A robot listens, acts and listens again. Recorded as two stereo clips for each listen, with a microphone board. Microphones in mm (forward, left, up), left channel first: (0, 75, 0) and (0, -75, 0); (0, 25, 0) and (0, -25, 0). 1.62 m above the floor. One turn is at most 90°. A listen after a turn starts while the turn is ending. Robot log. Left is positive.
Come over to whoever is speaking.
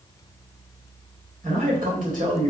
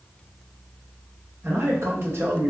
note: The man speaking: about 60° right or 120° right.
cmd yaw -60
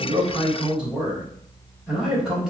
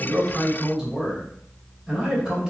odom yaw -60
cmd fwd 1.0
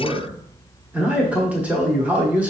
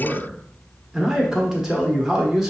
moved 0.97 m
note: The man speaking is now 10° right.
cmd yaw -10
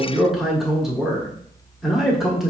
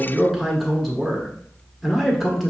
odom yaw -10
cmd fwd 1.0
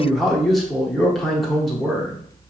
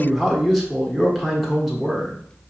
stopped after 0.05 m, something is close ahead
end: I am next to the man speaking.